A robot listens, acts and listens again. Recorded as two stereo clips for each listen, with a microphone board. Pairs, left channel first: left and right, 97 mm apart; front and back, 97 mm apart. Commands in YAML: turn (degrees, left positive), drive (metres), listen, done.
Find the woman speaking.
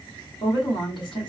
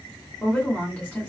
turn: 75
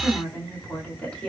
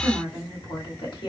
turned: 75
turn: 15
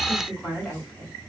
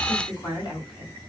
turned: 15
done: "Facing the woman speaking."